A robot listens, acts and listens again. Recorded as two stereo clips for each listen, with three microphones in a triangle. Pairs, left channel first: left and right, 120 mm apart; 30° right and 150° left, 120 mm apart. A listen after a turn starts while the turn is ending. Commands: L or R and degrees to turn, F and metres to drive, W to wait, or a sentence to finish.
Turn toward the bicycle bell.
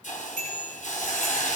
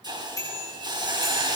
R95
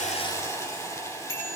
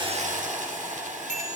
R30
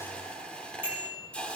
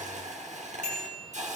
R15
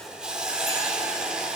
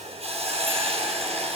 W
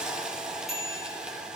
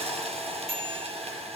Found it: a bicycle bell, straight ahead.